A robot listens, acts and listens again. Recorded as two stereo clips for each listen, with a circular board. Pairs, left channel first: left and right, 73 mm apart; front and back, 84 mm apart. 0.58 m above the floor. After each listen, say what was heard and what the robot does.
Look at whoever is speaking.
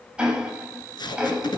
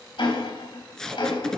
Keep listening.
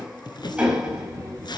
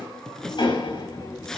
The child speaking: 50° right. Turn 50° right.
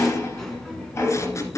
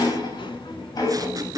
Found it: a child speaking, straight ahead, 2 to 4 m away.